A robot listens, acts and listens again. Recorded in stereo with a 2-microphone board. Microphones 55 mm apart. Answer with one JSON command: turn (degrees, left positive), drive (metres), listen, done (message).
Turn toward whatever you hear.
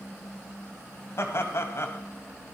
{"turn": 50}
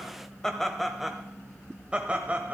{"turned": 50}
{"turn": -30}
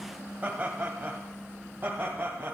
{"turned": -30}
{"turn": -40}
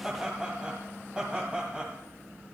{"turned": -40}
{"turn": -15}
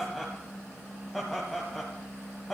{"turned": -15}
{"done": "Found it: laughter, straight ahead."}